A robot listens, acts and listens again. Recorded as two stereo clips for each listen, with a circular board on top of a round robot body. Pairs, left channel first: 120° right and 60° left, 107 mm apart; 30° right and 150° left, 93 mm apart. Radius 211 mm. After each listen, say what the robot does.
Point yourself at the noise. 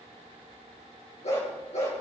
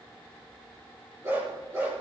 Turn 145° right.
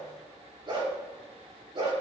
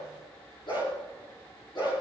Turn 15° left.
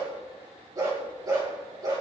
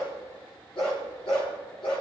Facing the dog barking.